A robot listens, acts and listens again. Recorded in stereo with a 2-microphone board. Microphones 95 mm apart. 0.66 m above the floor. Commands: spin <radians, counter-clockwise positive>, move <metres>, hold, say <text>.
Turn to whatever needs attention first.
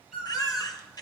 spin 0.70
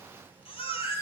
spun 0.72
spin 1.66
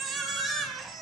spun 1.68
say Found it: a baby crying, straight ahead, 2 to 4 m away.